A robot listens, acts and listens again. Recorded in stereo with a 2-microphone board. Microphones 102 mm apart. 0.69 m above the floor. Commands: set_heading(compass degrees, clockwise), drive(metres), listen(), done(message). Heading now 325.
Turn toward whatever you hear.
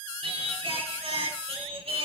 set_heading(35)
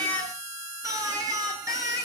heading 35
set_heading(70)
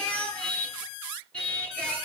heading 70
set_heading(60)
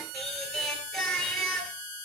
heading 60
done("Found it: singing, straight ahead, over 4 m away.")